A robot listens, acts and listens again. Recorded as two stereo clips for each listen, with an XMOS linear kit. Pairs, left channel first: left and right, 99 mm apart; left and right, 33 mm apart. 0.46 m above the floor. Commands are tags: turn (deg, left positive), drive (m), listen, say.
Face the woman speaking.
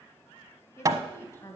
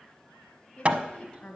<turn deg="25"/>
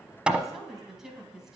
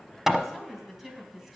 <say>Facing the woman speaking.</say>